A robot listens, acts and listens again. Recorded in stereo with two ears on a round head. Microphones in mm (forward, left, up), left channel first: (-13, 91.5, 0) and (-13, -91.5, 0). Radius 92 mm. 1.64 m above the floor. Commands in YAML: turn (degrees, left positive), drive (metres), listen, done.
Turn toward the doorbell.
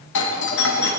turn: 60
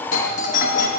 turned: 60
turn: 45
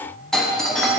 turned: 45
done: "Found it: a doorbell, straight ahead, 1 to 2 m away."